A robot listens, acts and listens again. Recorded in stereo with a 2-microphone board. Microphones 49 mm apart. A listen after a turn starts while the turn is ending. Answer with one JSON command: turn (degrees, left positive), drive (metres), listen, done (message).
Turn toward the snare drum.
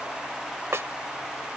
{"turn": -75}
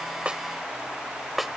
{"done": "Facing the snare drum."}